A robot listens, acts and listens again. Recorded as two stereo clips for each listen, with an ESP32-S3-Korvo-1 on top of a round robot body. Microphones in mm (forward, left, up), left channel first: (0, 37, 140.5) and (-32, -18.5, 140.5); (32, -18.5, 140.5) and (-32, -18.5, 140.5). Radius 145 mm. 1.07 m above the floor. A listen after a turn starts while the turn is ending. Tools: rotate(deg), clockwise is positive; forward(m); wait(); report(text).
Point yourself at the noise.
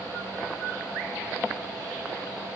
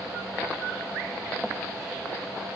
wait()
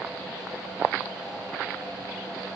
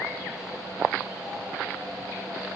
wait()
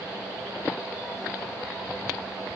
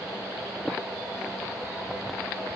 report("I can't make out anything.")